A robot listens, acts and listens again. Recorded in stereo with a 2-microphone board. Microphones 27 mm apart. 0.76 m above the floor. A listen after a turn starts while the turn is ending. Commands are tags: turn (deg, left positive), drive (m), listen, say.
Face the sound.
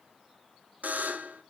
<turn deg="-90"/>
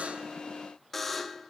<say>Found it: a buzzer, straight ahead, under 1 m away.</say>